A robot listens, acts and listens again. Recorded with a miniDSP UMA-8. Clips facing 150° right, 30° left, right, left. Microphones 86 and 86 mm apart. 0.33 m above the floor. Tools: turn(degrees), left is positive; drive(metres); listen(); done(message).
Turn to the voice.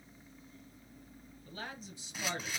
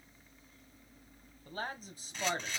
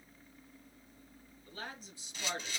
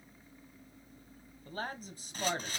turn(degrees=60)
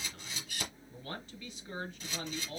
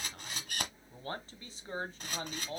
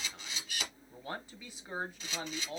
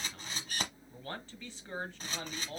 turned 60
turn(degrees=-15)
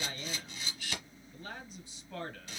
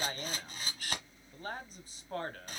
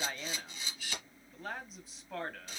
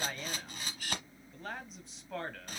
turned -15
done("Facing the man speaking.")